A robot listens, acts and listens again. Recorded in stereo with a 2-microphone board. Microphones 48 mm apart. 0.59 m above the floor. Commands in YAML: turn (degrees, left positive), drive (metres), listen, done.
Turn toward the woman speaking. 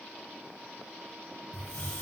listen: true
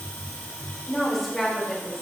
turn: 30
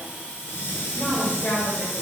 turn: 130
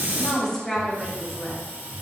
turn: 10
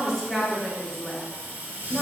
done: "Facing the woman speaking."